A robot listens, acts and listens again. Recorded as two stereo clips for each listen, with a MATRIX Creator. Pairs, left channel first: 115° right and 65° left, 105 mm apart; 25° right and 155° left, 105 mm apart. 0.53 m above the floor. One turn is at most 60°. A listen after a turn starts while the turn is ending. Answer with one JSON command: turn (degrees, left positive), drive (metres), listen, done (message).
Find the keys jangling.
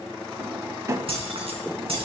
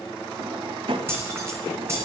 {"turn": 60}
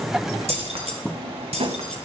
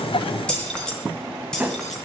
{"turn": 60}
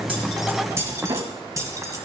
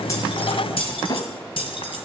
{"turn": 10}
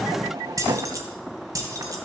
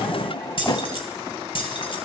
{"turn": 10}
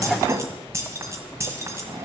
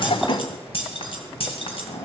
{"done": "Found it: keys jangling, straight ahead."}